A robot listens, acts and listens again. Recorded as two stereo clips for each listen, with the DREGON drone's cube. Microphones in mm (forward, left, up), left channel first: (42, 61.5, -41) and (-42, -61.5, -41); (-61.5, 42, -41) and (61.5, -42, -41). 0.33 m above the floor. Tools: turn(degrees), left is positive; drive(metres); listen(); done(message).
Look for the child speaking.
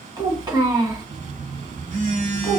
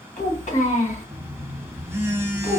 turn(degrees=175)
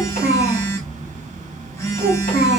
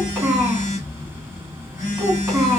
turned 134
turn(degrees=45)
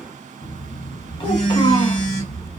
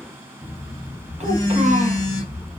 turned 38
done("Found it: a child speaking, straight ahead.")